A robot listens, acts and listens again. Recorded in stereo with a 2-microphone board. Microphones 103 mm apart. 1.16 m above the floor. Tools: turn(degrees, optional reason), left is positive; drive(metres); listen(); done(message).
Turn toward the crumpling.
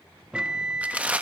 turn(degrees=-30)
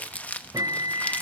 turn(degrees=15, reason="So it is at 15° left.")
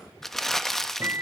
done("Facing the crumpling.")